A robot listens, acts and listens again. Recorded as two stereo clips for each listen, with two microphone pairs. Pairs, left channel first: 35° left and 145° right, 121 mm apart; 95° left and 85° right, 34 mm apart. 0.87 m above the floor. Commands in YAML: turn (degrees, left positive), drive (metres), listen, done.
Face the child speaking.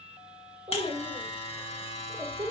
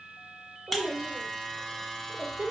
turn: -105
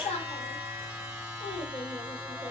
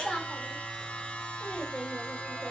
turn: 45
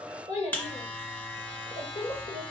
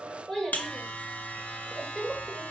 turn: 25
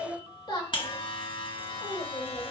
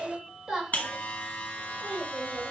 turn: -10
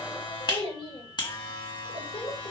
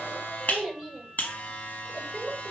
done: "Facing the child speaking."